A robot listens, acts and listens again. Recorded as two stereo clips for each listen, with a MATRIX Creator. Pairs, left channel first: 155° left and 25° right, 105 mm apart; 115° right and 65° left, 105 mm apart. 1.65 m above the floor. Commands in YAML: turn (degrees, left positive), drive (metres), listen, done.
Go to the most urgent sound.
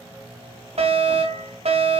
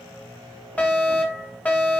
turn: -35
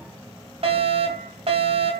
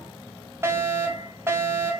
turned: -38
drive: 1.0
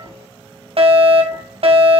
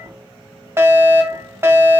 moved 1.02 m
drive: 1.0
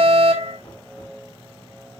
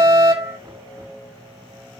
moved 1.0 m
drive: 1.0
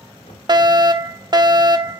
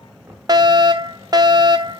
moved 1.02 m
turn: 20
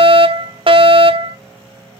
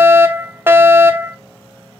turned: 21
drive: 1.0
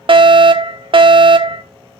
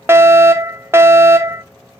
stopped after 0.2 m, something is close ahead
done: "Arrived at the fire alarm, straight ahead."